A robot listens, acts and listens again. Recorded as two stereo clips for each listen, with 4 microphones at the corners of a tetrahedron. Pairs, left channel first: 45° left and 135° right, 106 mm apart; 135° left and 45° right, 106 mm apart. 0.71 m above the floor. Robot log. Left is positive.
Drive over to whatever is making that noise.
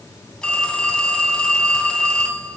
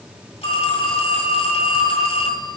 note: The phone ringing: 125° left.
cmd yaw +125
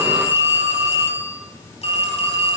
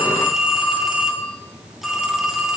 note: The phone ringing is now 45° left.
cmd yaw +45
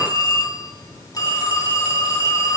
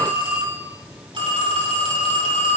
note: The phone ringing is now 10° right.
cmd yaw -10
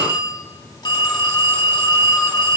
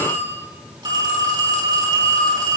cmd fwd 1.0
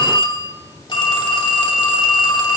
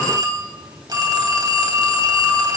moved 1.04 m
cmd fwd 1.0
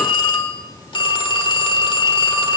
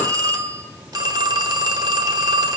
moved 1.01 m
cmd fwd 1.0
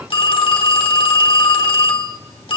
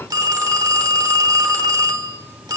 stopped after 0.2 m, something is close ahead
note: The phone ringing is now 10° left.
cmd yaw +10
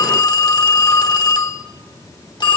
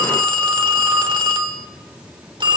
end: Arrived at the phone ringing, straight ahead.